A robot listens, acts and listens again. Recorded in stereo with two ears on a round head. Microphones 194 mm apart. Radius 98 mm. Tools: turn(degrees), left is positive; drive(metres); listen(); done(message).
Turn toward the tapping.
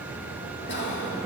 listen()
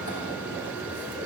listen()
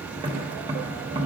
turn(degrees=-20)
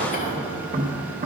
turn(degrees=-140)
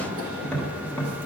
done("Found it: tapping, straight ahead.")